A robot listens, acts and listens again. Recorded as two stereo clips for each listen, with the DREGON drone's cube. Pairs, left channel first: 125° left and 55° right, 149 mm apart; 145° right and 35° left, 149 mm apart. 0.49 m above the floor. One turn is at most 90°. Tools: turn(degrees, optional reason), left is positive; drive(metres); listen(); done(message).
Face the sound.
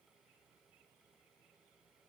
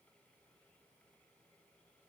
listen()
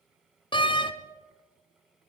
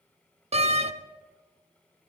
turn(degrees=70, reason="The door slam: 70° left.")
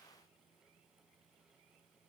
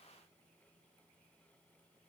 done("I heard a door slam from this way, but can't make it out now.")